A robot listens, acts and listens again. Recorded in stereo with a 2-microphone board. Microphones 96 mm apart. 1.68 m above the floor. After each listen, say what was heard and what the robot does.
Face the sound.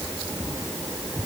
Keep listening.
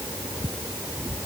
Keep listening.
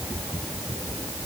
I can't make out anything to turn to.